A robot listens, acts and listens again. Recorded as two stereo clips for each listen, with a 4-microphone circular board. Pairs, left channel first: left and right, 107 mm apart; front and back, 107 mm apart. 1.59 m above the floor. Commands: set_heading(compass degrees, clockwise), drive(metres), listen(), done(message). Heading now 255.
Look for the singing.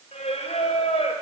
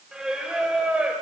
set_heading(155)
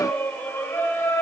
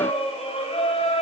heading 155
set_heading(130)
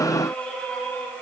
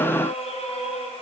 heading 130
set_heading(115)
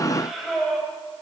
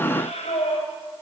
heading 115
done("Found it: singing, straight ahead.")